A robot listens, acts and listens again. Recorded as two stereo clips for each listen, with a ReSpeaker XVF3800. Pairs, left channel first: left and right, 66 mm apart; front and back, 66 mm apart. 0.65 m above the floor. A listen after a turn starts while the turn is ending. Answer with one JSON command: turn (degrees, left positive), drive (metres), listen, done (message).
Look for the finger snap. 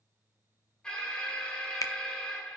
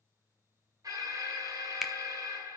{"turn": 95}
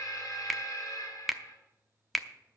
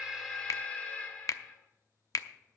{"done": "Facing the finger snap, under 1 m away."}